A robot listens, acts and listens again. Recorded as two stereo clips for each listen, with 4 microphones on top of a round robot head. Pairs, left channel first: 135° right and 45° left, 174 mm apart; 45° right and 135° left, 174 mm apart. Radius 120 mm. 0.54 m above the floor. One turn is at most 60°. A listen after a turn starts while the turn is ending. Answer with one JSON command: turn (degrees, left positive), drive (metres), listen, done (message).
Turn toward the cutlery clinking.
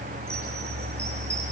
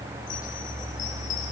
{"listen": true}
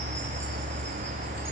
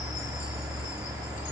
{"listen": true}
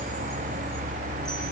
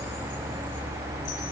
{"done": "I can't make out cutlery clinking to turn to."}